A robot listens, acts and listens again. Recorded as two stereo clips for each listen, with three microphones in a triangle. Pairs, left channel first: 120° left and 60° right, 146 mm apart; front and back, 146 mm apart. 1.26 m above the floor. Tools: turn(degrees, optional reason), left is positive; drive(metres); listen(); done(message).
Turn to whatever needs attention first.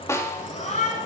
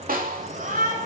turn(degrees=160, reason="The shout: 160° left.")
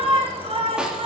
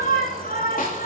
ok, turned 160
turn(degrees=-10, reason="The shout is now 10° right.")
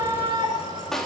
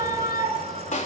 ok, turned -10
done("Found it: a shout, straight ahead.")